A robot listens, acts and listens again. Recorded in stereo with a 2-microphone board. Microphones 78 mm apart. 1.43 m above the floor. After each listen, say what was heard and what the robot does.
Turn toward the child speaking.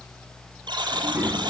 The child speaking: about 20° right or 160° right. Turn 20° right.
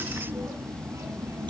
The child speaking: about 40° right or 140° right. Turn 40° right.
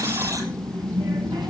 So it is at 110° right. Turn 110° right.
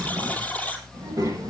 The child speaking is now 50° right. Turn 50° right.
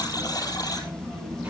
The child speaking is now 15° right. Turn 15° right.
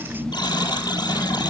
Facing the child speaking.